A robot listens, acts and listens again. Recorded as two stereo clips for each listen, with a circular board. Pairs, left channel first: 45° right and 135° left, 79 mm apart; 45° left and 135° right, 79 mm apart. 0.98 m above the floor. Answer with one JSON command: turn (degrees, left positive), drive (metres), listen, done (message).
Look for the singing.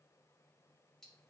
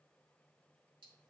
{"listen": true}
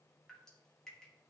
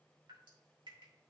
{"listen": true}
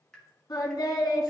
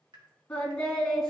{"turn": -35}
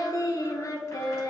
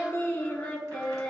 {"turn": -30}
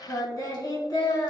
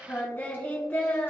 {"turn": -25}
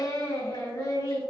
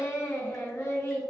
{"done": "Found it: singing, straight ahead, 1 to 2 m away."}